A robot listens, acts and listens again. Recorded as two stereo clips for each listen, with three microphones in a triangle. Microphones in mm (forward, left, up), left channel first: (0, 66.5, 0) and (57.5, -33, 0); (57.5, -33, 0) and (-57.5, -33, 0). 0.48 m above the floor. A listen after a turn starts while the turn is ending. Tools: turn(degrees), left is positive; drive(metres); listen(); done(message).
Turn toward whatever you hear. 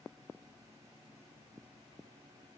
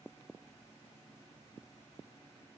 listen()
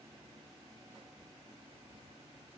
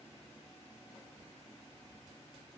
listen()
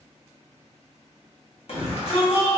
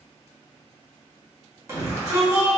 turn(degrees=120)
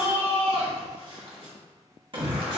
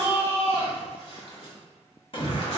turn(degrees=-30)
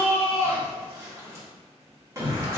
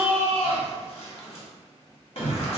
done("Found it: a shout, straight ahead, 1 to 2 m away.")